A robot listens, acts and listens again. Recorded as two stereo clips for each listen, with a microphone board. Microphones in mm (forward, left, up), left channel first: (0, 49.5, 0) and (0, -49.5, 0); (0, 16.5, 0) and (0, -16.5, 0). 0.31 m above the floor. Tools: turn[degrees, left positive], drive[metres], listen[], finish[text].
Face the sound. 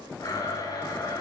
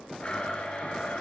Thought: The blender: about 40° left or 140° left.
Action: turn[40]
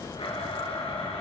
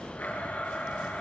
Thought: So it is at 100° left.
Action: turn[100]
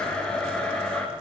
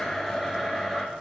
Thought: The blender is now 10° left.
Action: turn[10]
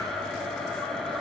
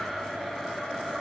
Action: finish[Found it: a blender, straight ahead.]